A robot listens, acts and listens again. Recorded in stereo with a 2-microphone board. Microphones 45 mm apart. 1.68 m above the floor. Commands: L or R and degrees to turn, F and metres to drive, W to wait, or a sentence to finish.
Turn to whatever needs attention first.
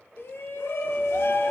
L60
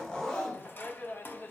L55
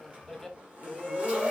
Found it: a shout, straight ahead.